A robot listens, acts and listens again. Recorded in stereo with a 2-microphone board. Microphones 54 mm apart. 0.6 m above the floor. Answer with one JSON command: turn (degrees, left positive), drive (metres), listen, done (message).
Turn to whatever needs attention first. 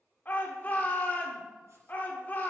{"turn": 35}
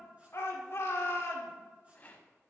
{"turn": 100}
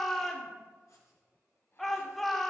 {"done": "Found it: a shout, straight ahead."}